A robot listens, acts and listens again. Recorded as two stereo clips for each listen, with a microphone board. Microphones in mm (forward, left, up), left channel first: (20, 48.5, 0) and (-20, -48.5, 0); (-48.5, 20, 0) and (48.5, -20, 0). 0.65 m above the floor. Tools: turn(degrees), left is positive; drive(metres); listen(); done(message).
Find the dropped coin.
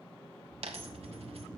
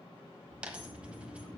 turn(degrees=-100)
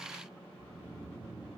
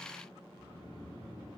done("I heard a dropped coin from this way, but can't make it out now.")